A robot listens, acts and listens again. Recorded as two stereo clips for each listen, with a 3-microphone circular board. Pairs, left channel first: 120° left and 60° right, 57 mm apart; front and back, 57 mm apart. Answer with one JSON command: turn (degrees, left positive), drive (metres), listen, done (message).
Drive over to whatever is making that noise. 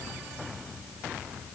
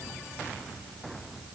{"listen": true}
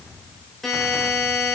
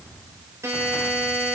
{"turn": -155}
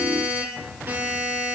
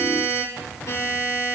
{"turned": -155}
{"turn": -10}
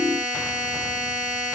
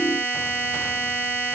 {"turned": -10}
{"drive": 1.0}
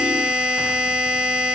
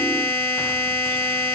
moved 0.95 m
{"turn": 10}
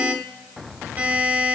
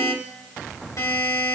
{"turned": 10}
{"drive": 1.0}
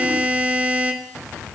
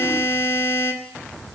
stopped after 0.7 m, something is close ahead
{"turn": -10}
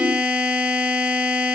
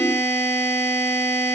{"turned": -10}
{"done": "Arrived at the buzzer, straight ahead."}